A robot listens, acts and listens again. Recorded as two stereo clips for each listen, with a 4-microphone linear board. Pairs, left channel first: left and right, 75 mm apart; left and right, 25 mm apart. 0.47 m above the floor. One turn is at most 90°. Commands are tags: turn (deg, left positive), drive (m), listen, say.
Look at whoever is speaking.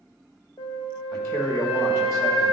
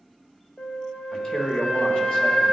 <turn deg="45"/>
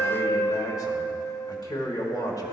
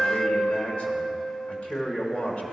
<turn deg="80"/>
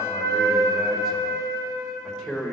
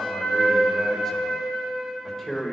<say>Facing the man speaking, 1 to 2 m away.</say>